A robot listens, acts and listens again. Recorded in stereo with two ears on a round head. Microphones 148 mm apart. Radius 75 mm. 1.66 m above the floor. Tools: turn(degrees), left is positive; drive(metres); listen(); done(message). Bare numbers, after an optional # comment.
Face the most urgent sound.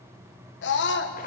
turn(90)
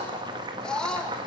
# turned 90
done("Found it: a scream, straight ahead, 1 to 2 m away.")